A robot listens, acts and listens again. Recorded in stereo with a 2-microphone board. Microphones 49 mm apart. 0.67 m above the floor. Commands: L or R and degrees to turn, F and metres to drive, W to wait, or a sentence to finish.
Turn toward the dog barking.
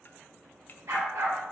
R70
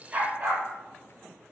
R35
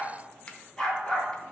L15
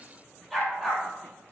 Facing the dog barking, over 4 m away.